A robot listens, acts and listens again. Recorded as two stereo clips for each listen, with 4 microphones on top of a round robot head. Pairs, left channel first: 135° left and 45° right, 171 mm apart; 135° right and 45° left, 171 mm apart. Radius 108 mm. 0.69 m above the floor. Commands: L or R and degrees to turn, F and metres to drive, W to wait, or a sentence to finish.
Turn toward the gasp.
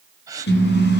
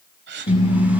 L25
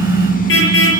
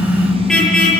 I heard a gasp from this way, but can't make it out now.